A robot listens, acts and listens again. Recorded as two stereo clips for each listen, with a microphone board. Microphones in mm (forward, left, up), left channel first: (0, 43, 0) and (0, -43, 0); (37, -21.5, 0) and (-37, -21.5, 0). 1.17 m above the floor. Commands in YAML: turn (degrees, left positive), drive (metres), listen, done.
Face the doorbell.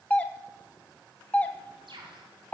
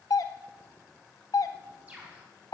turn: 20
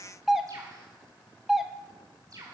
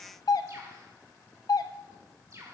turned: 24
done: "Found it: a doorbell, straight ahead."